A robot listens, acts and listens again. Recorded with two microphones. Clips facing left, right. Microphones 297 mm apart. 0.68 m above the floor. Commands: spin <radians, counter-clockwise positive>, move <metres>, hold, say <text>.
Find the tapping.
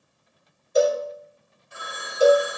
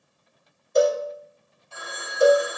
hold
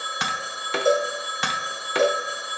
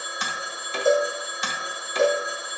spin 1.22
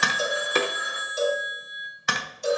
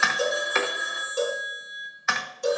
spin 0.70
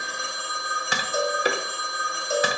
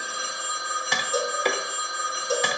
spin 0.17
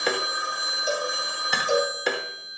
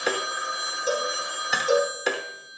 say Facing the tapping.